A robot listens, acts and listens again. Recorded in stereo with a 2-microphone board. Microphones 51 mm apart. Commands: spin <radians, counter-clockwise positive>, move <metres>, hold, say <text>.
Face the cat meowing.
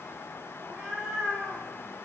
spin -0.52
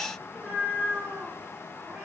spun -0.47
spin -2.44
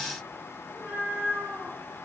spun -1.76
spin -0.70
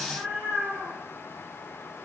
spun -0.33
spin -0.44
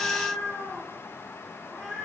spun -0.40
say Found it: a cat meowing, straight ahead, 2 to 4 m away.